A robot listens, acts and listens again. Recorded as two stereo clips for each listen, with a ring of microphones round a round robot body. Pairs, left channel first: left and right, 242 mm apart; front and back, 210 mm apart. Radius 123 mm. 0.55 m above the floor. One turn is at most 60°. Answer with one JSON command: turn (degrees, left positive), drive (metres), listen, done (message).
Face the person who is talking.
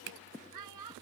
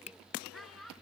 {"turn": -60}
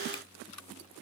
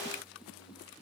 {"turn": -30}
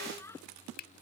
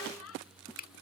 {"turn": 10}
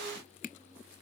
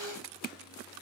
{"listen": true}
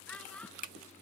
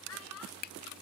{"done": "Found it: a child speaking, straight ahead."}